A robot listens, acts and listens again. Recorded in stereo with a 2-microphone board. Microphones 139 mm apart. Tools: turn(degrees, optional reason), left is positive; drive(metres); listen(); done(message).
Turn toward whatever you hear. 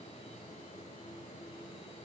listen()
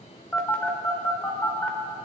turn(degrees=30)
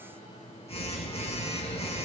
turn(degrees=135, reason="So it is at 135° left.")
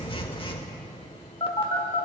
turn(degrees=40, reason="The phone buzzing is now 40° left.")
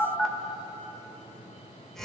done("Facing the phone buzzing, 1 to 2 m away.")